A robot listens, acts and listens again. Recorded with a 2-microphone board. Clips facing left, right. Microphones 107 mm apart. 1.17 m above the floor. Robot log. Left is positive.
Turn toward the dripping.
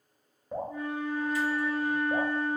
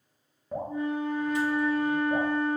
cmd yaw +30
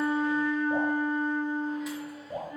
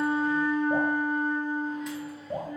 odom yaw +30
note: So it is at 25° right.
cmd yaw -25
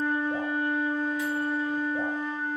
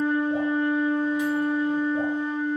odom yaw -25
cmd idle
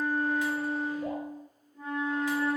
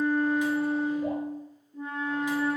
cmd idle
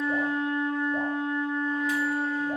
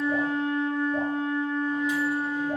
end: I heard dripping from this way, but can't make it out now.